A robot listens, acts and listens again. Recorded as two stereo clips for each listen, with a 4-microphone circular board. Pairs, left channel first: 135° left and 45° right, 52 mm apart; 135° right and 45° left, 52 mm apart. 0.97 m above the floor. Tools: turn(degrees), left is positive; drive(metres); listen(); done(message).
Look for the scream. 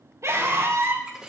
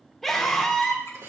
turn(degrees=-50)
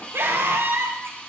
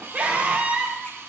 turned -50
turn(degrees=-10)
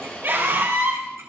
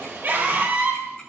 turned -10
done("Found it: a scream, straight ahead.")